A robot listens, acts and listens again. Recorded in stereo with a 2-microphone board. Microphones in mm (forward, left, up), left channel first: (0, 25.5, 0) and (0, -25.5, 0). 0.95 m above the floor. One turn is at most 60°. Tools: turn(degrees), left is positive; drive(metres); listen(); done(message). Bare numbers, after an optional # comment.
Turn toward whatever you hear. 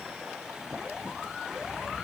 listen()
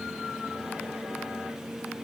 listen()
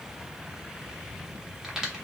turn(-30)
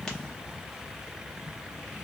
listen()
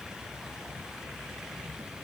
done("I heard a crack, but can't make it out now. It was about 20° left or 140° right.")